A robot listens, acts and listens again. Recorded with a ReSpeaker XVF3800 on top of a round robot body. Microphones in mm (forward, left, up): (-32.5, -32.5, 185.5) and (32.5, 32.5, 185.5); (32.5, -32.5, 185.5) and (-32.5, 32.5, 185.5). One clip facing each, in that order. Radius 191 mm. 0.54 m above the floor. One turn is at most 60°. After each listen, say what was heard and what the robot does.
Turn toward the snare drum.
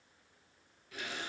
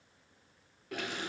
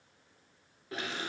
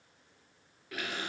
Keep listening.
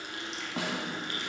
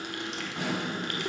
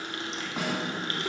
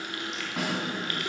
The snare drum: 135° right. Turn 60° right.
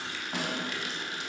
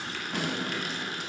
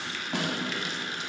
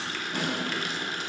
The snare drum is now 60° right. Turn 60° right.
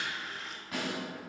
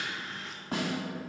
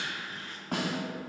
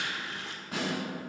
The snare drum is now 15° right. Turn 15° right.
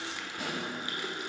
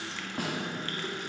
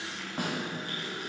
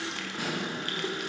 Found it: a snare drum, straight ahead, 2 to 4 m away.